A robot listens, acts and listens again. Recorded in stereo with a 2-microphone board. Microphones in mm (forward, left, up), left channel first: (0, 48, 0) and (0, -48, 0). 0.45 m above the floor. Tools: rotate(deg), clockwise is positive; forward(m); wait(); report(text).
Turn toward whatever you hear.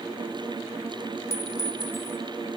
rotate(-30)
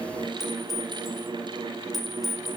report("Facing the clink.")